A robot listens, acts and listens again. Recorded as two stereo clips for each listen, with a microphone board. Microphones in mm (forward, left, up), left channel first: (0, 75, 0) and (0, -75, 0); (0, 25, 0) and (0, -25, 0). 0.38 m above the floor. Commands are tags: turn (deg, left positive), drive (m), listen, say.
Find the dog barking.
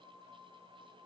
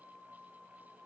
<listen/>
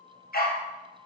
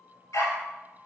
<turn deg="90"/>
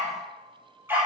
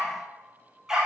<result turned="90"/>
<turn deg="-15"/>
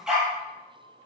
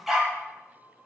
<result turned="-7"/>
<say>Found it: a dog barking, straight ahead, 2 to 4 m away.</say>